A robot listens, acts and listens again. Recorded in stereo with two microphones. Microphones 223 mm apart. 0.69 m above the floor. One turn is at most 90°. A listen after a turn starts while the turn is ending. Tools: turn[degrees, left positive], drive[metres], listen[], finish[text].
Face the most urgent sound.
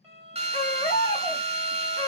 Thought: The baby crying: about 20° left or 160° left.
Action: turn[20]
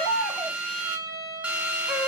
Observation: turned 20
Action: finish[Facing the baby crying, 1 to 2 m away.]